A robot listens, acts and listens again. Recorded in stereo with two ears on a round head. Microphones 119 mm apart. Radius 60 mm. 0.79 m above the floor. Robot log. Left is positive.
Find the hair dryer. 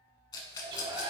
note: The hair dryer: about 35° right or 145° right.
cmd yaw -35
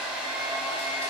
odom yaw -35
end: Facing the hair dryer, under 1 m away.